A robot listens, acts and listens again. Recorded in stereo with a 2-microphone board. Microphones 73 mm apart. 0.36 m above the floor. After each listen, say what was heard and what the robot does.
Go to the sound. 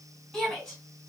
Turn 30° left.
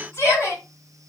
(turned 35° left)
So it is at 135° left. Turn 135° left.
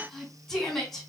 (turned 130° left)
Drive 1.0 m forward.
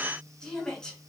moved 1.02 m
The shout is now 15° left. Turn 15° left.
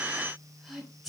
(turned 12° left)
Drive 1.0 m forward.
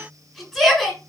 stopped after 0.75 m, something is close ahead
I am next to the shout.